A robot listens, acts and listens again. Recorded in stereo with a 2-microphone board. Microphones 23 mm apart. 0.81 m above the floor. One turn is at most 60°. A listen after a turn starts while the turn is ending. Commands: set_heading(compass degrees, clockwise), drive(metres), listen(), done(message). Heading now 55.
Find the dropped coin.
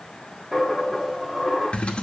set_heading(85)
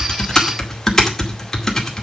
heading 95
listen()
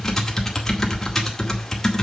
done("I heard a dropped coin, but can't make it out now. It was about 30° left or 130° right.")